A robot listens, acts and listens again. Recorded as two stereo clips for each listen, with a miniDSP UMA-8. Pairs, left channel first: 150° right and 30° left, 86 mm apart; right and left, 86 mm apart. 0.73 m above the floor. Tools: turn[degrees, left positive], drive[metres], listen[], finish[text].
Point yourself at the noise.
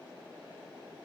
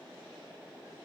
Action: listen[]
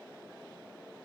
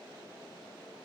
Action: listen[]
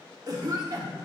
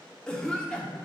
Thought: The cough: 10° right.
Action: turn[-10]
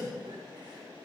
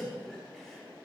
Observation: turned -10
Action: finish[Facing the cough.]